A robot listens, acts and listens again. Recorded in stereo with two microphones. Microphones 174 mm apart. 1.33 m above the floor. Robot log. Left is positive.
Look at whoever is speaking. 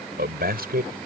note: The man speaking: about 65° right or 115° right.
cmd yaw -65
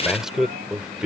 end: Found it: a man speaking, straight ahead.